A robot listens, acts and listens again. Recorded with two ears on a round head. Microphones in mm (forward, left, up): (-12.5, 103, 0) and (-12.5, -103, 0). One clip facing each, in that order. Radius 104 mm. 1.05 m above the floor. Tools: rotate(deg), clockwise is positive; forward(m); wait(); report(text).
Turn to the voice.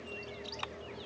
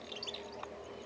wait()
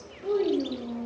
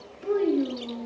rotate(20)
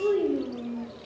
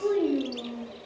report("Found it: a child speaking, straight ahead.")